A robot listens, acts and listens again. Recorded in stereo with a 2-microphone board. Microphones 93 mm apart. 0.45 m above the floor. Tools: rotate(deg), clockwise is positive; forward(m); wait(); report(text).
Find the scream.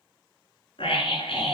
rotate(-75)
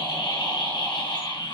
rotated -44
rotate(-60)
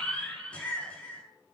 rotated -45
rotate(-10)
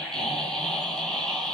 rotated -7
report("Found it: a scream, straight ahead.")